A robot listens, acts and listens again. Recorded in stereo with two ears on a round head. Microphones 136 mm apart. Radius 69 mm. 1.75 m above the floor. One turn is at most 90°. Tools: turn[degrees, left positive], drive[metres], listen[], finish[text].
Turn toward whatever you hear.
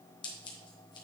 Thought: The scissors: about 30° left or 150° left.
Action: turn[30]
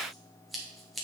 Action: finish[Facing the scissors, 1 to 2 m away.]